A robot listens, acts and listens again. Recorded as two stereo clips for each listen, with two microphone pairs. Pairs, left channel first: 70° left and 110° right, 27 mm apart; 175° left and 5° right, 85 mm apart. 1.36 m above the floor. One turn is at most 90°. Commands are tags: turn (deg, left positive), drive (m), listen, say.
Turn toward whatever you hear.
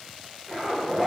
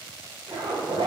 <turn deg="-10"/>
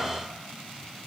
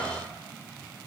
<listen/>
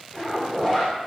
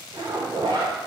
<say>Facing the zipper.</say>